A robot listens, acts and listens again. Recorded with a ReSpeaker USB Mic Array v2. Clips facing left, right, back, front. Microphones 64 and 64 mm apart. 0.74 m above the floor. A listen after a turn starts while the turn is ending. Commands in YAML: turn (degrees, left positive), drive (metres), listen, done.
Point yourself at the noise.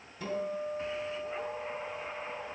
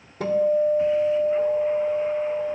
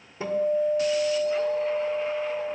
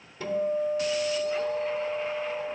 turn: -115
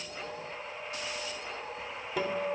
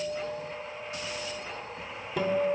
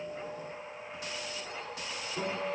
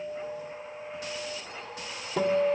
done: "Found it: a guitar, straight ahead."